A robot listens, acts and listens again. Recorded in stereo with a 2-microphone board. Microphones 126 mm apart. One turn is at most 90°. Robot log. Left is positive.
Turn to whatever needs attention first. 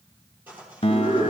note: The scream: about 50° right or 130° right.
cmd yaw -50
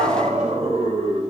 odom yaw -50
note: So it is at 70° right.
cmd yaw -70
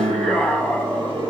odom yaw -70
end: Found it: a scream, straight ahead.